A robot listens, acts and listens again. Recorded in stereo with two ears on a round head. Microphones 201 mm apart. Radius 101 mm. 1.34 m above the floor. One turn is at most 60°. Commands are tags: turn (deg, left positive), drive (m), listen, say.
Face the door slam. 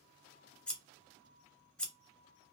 <listen/>
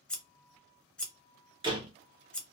<turn deg="-20"/>
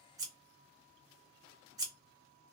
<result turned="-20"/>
<listen/>
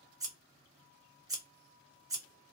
<say>I heard a door slam, but can't make it out now. It was about straight ahead or 140° right.</say>